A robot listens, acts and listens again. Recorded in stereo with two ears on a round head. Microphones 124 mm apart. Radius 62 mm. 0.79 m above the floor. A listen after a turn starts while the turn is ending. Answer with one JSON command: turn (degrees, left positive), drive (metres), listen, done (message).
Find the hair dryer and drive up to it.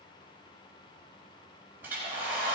{"turn": -30}
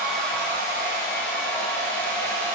{"turn": 15}
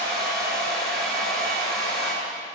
{"drive": 1.0}
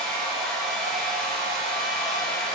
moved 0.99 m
{"drive": 1.0}
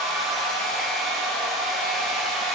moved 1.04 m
{"drive": 1.0}
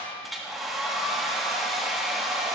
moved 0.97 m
{"drive": 1.0}
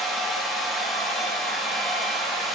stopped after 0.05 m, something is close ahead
{"done": "I am next to the hair dryer."}